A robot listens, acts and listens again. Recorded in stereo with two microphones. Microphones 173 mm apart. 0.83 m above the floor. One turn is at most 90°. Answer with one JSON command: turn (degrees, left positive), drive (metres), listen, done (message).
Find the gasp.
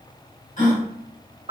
{"turn": 50}
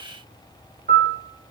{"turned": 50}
{"listen": true}
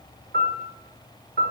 {"done": "I heard a gasp, but can't make it out now. It was about straight ahead or 80° left."}